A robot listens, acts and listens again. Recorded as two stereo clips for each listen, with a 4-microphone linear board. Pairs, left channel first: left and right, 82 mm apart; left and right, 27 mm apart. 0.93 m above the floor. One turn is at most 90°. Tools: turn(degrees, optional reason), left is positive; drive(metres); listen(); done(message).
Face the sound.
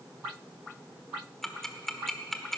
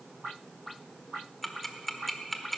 turn(degrees=30)
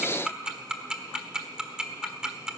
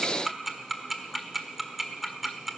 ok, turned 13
turn(degrees=-10, reason="So it is at 10° right.")
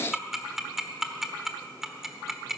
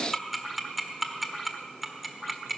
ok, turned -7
done("Found it: ticking, straight ahead.")